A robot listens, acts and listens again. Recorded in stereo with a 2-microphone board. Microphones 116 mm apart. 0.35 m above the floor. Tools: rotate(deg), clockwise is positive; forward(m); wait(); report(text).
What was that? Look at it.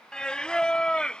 rotate(-30)
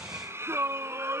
rotate(20)
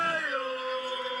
report("Facing the singing.")